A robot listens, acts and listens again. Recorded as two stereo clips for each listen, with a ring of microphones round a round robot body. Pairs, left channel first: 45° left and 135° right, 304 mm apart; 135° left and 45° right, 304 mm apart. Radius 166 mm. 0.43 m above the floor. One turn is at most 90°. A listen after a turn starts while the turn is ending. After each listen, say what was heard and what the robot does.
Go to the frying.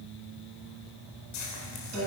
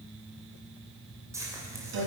The frying: 35° left. Turn 35° left.
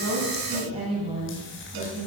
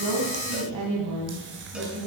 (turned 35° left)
Keep listening.
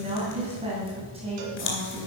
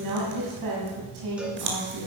Drive 1.0 m forward.
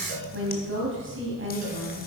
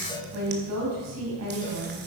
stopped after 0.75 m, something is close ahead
Keep listening.
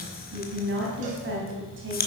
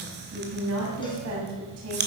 Arrived at the frying, straight ahead.